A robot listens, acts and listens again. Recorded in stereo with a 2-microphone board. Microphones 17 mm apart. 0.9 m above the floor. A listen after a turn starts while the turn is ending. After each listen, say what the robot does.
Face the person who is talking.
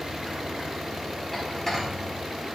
Keep listening.
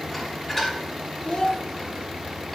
Turn 60° left.
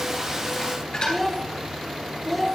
Found it: a child speaking, straight ahead.